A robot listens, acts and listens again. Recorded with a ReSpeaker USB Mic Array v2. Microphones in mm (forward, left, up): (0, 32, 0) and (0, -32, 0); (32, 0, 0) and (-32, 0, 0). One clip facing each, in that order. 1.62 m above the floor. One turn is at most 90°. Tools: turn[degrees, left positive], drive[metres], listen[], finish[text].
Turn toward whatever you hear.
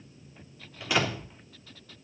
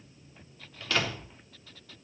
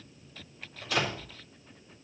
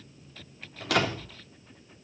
Thought: The door slam: 165° left.
Action: turn[90]
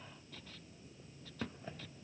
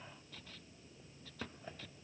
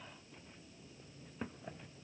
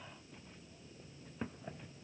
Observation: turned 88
Thought: Nothing new. It was at 80° left.
Action: turn[80]
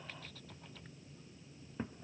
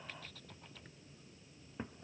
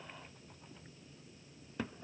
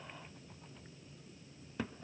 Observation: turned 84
Action: finish[Facing where the door slam came from. I can't hear it now.]